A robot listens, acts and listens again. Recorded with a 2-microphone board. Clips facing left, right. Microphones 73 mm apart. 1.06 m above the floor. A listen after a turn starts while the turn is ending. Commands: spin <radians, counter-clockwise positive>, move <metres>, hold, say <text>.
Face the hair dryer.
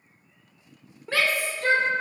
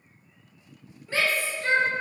hold
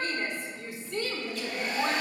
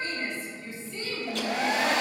spin -1.57
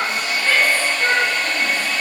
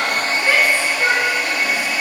spin -0.17
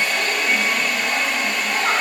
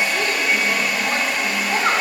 say Found it: a hair dryer, straight ahead, under 1 m away.